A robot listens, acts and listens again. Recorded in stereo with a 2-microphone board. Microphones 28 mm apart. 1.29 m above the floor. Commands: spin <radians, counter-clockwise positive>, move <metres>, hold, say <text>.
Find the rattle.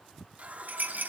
spin -1.57
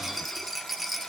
say Found it: a rattle, straight ahead, 1 to 2 m away.